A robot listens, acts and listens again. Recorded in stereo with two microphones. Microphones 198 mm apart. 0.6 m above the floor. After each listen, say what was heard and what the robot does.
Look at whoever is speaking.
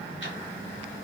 Keep listening.
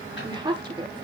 The woman speaking: about 25° right or 155° right. Turn 25° right.
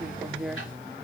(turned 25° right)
Facing the woman speaking.